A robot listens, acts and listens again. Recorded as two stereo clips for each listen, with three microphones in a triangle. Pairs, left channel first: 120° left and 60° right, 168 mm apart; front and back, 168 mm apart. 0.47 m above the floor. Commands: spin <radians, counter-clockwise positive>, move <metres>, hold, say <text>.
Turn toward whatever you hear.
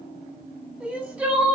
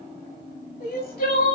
spin 0.44
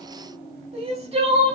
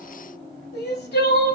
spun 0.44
say Facing the crying.